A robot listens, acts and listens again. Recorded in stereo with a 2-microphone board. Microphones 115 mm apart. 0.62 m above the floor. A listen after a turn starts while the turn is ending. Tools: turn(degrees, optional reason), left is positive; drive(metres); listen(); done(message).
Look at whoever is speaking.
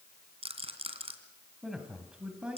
turn(degrees=-30)
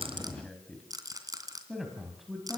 turn(degrees=-30)
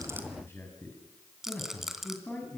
turn(degrees=15, reason="So it is at 15° left.")
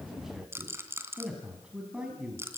done("Found it: a man speaking, straight ahead, over 4 m away.")